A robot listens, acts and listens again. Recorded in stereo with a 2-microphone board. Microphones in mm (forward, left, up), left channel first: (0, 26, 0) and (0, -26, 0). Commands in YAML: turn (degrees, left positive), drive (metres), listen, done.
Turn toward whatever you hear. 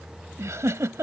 turn: -75
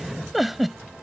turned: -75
done: "Found it: a giggle, straight ahead."